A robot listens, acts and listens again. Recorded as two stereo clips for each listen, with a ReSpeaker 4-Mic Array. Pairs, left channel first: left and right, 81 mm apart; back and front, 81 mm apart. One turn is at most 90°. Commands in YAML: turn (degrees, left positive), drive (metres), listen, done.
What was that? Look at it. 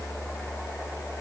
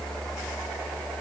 listen: true
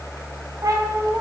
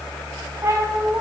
turn: -50
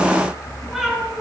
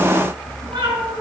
done: "Found it: a cat meowing, straight ahead, 2 to 4 m away."